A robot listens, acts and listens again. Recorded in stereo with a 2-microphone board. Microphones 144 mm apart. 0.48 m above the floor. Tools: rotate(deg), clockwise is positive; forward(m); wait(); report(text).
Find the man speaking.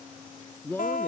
rotate(-30)
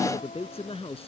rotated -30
rotate(-135)
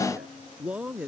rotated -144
rotate(10)
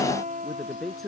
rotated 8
report("Found it: a man speaking, straight ahead.")